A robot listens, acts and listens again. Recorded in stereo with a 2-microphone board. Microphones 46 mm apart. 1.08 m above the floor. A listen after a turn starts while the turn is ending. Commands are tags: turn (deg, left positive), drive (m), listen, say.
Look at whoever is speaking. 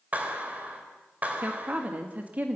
<turn deg="-30"/>
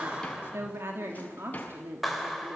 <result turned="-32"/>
<turn deg="-125"/>
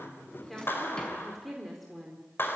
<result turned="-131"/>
<say>Found it: a woman speaking, straight ahead.</say>